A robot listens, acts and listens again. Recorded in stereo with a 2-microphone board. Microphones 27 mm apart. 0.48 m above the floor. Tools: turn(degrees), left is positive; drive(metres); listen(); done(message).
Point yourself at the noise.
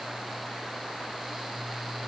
listen()
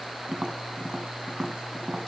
turn(degrees=-30)
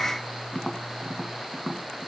done("Facing the tapping, 1 to 2 m away.")